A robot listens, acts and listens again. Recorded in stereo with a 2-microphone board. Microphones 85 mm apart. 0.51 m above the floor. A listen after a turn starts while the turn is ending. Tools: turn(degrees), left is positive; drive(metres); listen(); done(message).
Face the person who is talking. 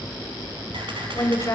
turn(degrees=35)
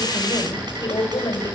turn(degrees=105)
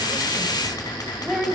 done("Found it: a woman speaking, straight ahead.")